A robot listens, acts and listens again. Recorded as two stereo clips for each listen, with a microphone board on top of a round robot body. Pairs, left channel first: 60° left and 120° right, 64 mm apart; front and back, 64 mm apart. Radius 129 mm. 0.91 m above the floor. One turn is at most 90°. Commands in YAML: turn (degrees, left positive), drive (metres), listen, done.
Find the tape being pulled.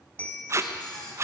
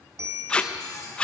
turn: -75
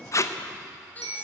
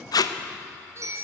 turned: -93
turn: 20
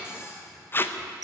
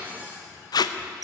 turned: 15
done: "Found it: tape being pulled, straight ahead, under 1 m away."